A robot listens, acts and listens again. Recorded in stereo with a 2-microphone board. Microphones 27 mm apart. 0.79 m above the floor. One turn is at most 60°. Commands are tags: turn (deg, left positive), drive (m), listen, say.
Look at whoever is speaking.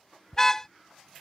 <listen/>
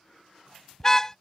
<listen/>
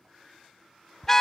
<say>I can't make out anyone speaking to turn to.</say>